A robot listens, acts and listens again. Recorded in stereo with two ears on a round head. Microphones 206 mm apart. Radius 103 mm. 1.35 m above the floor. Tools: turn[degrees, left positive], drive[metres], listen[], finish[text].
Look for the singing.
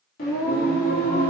Thought: The singing: about 45° left or 135° left.
Action: turn[45]
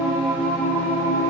Thought: So it is at 15° left.
Action: turn[15]
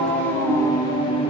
Thought: The singing is now 25° left.
Action: turn[25]
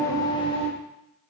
Thought: The singing is now 30° left.
Action: turn[30]
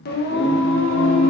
Thought: The singing is now 60° left.
Action: turn[60]
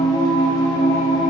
Thought: The singing is now 15° left.
Action: turn[15]
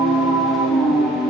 Action: finish[Found it: singing, straight ahead.]